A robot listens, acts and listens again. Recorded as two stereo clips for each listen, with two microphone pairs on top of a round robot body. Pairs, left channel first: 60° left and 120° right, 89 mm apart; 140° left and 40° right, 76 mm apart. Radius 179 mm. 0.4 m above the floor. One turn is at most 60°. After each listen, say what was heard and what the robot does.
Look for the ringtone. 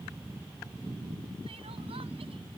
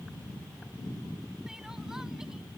Keep listening.
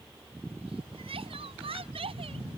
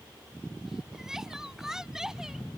Keep listening.
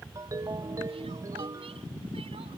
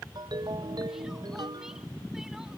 The ringtone: 65° right. Turn 60° right.
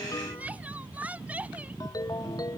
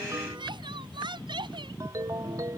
The ringtone is now 10° left. Turn 10° left.
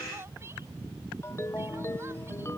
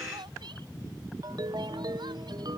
Found it: a ringtone, straight ahead.